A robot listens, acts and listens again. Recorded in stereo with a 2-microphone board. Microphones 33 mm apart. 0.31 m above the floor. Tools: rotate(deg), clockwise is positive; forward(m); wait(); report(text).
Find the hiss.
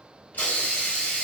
rotate(-65)
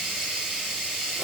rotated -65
report("Found it: a hiss, straight ahead, 1 to 2 m away.")